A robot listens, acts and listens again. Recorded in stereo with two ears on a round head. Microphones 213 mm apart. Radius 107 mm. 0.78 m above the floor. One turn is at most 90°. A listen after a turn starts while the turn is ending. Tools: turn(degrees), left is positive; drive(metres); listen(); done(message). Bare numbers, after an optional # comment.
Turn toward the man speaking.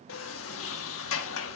listen()
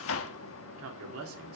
# The man speaking: about 65° right or 115° right.
turn(-65)
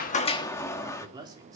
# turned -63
# So it is at 15° right.
turn(-15)
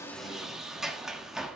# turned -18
listen()
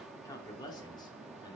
# The man speaking is now 20° left.
turn(20)
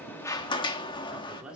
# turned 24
done("Found it: a man speaking, straight ahead, 2 to 4 m away.")